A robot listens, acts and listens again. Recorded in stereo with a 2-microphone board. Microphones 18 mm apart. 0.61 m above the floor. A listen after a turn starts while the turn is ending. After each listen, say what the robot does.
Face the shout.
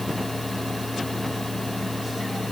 Keep listening.
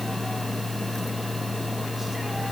Keep listening.
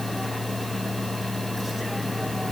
I can't make out a shout to turn to.